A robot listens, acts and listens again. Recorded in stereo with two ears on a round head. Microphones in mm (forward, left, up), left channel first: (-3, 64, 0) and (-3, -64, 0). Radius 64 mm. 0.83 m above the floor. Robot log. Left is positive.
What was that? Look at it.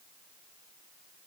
cmd idle
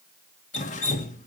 note: The dripping: about 50° left or 130° left.
cmd yaw +50
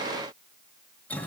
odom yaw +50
note: So it is at 10° left.
cmd yaw +10
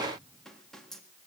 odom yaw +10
cmd idle
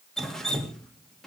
end: Facing the dripping.